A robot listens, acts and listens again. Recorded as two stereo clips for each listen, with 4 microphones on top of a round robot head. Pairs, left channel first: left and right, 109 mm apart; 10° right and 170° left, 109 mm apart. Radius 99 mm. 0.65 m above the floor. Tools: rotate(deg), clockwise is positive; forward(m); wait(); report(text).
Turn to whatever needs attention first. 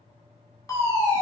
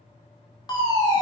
rotate(-35)
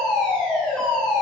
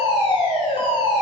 rotate(-10)
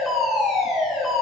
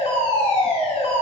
report("Facing the fire alarm, 2 to 4 m away.")